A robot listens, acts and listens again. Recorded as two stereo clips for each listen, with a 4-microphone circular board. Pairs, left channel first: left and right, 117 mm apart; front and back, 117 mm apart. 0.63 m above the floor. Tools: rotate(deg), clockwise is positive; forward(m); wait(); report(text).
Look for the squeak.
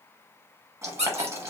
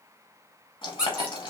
rotate(100)
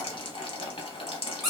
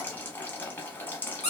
report("Facing the squeak, under 1 m away.")